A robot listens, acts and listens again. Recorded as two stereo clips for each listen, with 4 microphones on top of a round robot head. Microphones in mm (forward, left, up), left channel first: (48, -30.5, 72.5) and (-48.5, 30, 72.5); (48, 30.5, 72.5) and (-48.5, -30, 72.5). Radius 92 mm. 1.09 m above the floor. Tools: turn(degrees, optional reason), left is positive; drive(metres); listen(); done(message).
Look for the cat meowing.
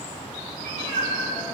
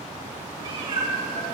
turn(degrees=165, reason="The cat meowing: 165° left.")
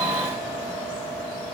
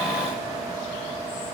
listen()
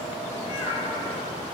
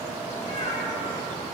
turn(degrees=15, reason="The cat meowing is now 15° left.")
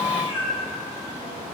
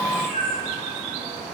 done("Facing the cat meowing.")